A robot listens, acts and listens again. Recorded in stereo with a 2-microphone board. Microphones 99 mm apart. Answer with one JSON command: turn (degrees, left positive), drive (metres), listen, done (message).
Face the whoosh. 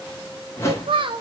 {"turn": 30}
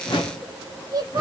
{"turn": 125}
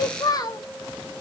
{"listen": true}
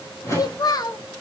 {"turn": 30}
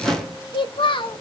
{"done": "Found it: a whoosh, straight ahead, 1 to 2 m away."}